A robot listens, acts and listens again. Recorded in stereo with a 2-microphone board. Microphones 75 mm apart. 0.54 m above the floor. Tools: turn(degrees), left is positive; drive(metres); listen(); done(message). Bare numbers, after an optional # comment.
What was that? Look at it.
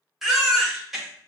turn(-30)
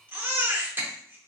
# So it is at 150° right.
turn(-150)
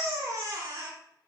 # The baby crying is now 55° right.
turn(-55)
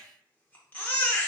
# The baby crying is now 25° left.
turn(25)
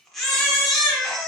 done("Facing the baby crying.")